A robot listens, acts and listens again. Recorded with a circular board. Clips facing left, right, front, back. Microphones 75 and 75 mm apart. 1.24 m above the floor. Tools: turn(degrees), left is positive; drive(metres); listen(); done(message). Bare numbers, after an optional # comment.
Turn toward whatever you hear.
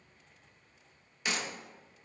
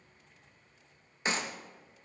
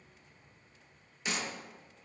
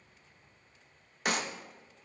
# The clap: 145° right.
turn(-145)
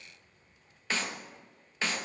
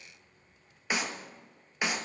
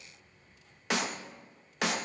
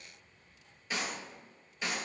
# The clap is now 15° right.
turn(-15)
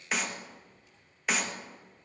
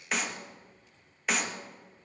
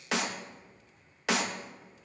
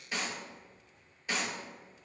done("Facing the clap, 1 to 2 m away.")